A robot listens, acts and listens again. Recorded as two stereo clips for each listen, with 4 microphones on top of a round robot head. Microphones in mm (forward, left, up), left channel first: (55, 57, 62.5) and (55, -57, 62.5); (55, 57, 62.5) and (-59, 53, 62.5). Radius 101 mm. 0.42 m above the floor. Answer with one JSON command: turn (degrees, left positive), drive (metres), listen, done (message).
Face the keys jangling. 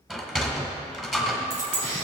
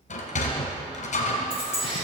{"turn": -95}
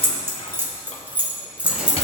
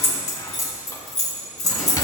{"turn": -10}
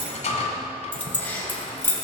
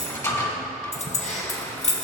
{"turn": 20}
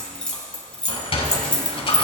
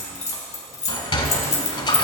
{"turn": 10}
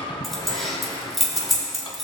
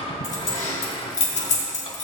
{"done": "Facing the keys jangling."}